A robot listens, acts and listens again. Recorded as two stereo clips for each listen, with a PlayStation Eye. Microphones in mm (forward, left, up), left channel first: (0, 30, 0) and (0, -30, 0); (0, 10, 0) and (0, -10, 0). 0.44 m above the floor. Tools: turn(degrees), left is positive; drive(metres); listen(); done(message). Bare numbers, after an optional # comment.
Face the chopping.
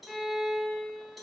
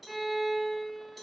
listen()
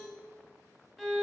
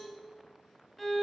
listen()
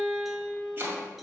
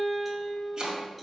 # The chopping: about 35° right or 145° right.
turn(-35)
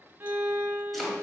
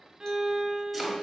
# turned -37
done("Found it: chopping, straight ahead.")